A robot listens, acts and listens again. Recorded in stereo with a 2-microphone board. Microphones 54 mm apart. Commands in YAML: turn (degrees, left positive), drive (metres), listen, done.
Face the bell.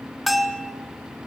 turn: 30
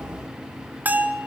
turn: -35
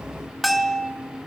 done: "Facing the bell."